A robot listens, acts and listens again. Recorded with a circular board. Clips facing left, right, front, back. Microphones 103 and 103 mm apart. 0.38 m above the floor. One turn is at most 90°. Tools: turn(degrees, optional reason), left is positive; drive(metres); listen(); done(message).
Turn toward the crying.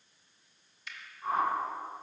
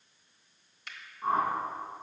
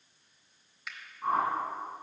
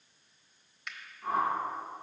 listen()
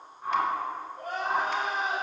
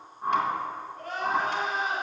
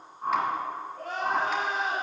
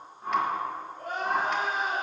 turn(degrees=15, reason="The crying: 15° left.")
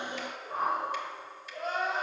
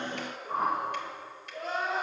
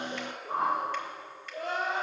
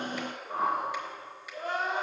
done("Found it: crying, straight ahead.")